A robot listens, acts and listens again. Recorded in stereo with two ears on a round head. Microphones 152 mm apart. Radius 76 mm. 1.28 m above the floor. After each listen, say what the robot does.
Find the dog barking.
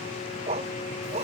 Turn 35° right.
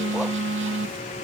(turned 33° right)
Keep listening.
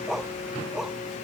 Facing the dog barking.